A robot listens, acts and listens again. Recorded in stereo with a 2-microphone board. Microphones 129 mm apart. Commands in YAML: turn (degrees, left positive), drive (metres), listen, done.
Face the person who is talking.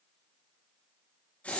listen: true
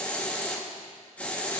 listen: true
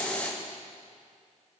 done: "I can't make out anyone speaking, only a hiss."